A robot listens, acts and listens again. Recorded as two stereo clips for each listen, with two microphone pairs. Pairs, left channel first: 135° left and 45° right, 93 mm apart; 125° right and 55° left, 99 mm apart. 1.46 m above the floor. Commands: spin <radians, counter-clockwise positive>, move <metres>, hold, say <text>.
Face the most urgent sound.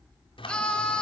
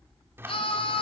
spin -2.53
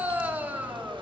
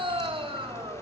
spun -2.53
spin 0.52
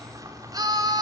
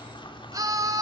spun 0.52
say Facing the scream.